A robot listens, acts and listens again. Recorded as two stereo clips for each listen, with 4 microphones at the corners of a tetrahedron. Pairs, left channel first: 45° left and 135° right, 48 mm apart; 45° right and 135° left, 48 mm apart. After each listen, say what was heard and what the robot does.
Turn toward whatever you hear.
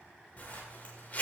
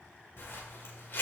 The zipper: 10° right. Turn 10° right.
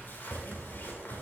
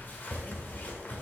Found it: a zipper, straight ahead.